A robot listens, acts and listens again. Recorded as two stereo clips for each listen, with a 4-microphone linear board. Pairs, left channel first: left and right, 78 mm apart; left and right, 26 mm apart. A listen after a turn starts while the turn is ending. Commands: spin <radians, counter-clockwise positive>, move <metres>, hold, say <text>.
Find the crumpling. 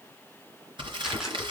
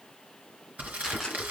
spin -1.57
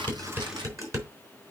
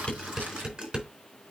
hold
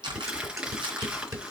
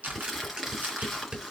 spin -0.17
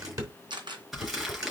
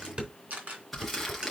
say Facing the crumpling.